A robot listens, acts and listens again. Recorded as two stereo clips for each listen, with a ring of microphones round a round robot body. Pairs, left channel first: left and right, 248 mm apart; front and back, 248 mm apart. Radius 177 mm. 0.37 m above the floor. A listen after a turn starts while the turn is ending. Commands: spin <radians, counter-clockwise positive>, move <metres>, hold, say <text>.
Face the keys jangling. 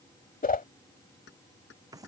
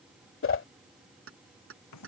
spin 2.62
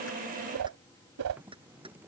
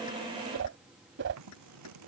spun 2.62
hold
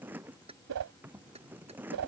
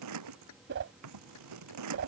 spin -0.35
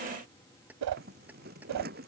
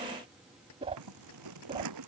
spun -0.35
hold
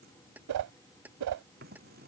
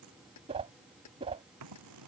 say Found it: keys jangling, straight ahead.